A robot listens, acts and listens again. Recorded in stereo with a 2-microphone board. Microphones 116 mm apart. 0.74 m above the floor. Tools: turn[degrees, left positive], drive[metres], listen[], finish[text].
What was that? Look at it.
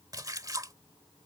Thought: The splash: about 30° right or 150° right.
Action: turn[-30]
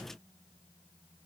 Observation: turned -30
Action: listen[]
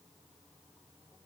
Action: finish[I heard a splash, but can't make it out now. It was about straight ahead or 120° right.]